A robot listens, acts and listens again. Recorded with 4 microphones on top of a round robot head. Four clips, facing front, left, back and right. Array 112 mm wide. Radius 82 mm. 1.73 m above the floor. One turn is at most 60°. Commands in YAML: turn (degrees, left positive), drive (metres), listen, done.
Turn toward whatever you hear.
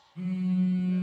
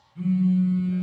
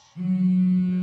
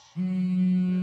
turn: -60
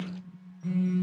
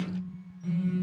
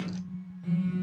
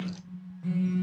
turn: -40
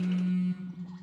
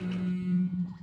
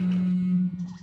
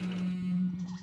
done: "Found it: a phone buzzing, straight ahead, 1 to 2 m away."